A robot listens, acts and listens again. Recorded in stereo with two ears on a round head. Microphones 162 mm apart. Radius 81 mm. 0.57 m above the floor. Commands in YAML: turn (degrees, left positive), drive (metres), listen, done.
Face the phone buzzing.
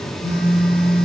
turn: 70
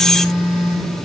turn: 25
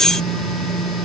done: "Facing the phone buzzing."